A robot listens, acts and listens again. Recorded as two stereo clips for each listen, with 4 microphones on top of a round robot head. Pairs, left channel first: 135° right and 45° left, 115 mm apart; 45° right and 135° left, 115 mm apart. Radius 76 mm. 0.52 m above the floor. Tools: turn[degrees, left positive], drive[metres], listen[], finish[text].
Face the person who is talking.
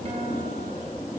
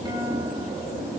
Action: listen[]
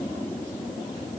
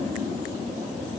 Action: listen[]
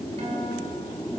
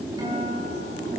Action: finish[I can't make out anyone speaking to turn to.]